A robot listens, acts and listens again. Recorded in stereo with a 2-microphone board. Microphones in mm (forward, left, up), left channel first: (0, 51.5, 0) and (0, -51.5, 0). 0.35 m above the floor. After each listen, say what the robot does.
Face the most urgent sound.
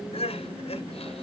Turn 90° left.
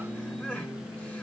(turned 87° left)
Turn 10° left.
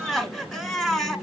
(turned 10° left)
Found it: crying, straight ahead, 1 to 2 m away.